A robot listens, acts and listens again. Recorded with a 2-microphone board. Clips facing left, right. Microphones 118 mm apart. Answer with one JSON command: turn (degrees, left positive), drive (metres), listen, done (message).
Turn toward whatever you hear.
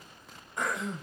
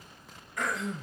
{"turn": 25}
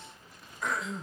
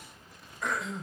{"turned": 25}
{"done": "Found it: throat clearing, straight ahead."}